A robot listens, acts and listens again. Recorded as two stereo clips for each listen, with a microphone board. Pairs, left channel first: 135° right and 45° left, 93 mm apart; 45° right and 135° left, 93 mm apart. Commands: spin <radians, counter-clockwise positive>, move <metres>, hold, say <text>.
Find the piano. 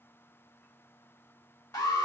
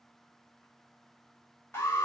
hold
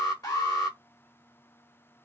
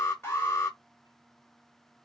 hold
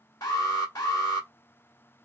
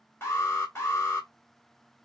say I can't make out a piano, only an alarm.